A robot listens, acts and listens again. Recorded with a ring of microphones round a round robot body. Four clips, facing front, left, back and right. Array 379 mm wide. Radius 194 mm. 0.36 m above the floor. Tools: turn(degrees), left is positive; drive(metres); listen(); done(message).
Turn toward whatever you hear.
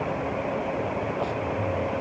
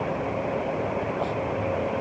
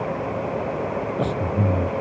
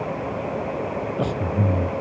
turn(degrees=-140)
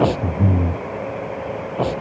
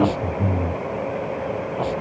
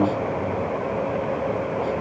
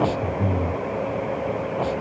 done("Found it: breathing, straight ahead.")